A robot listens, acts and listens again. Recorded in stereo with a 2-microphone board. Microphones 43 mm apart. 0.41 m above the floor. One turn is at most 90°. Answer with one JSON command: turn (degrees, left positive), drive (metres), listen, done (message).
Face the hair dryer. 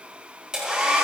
{"turn": -20}
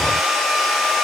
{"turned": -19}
{"done": "Facing the hair dryer."}